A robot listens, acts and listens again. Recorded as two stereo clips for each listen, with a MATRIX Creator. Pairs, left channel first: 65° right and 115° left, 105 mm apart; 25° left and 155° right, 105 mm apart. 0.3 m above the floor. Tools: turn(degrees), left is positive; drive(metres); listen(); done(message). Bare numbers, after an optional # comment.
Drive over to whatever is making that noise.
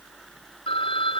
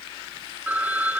# The phone ringing: 85° right.
turn(-85)
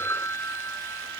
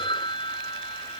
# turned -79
drive(1.0)
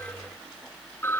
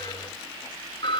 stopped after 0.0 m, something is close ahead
done("Something is in my way. I am facing the phone ringing but have not reached it.")